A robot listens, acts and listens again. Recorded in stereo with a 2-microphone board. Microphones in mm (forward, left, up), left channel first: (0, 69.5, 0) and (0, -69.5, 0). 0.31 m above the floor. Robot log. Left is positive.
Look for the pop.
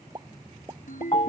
note: The pop: about 30° right or 150° right.
cmd yaw -30
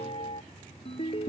cmd idle
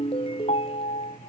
end: I heard a pop, but can't make it out now. It was about straight ahead or 120° right.